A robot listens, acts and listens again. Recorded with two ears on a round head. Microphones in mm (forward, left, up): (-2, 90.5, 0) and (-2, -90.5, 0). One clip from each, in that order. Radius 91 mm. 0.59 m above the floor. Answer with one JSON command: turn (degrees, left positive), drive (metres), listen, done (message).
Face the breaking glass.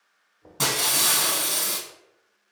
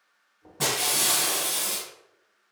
{"turn": 60}
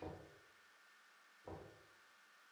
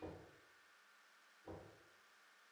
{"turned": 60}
{"listen": true}
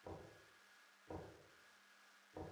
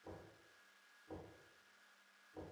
{"done": "I heard breaking glass, but can't make it out now. It was about straight ahead or 60° left."}